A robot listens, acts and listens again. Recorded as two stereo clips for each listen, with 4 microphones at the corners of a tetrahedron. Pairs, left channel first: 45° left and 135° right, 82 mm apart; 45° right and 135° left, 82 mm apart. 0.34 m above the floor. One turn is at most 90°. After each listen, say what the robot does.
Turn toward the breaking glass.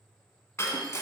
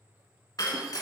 Turn 10° right.
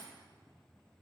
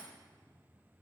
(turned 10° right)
I heard breaking glass from this way, but can't make it out now.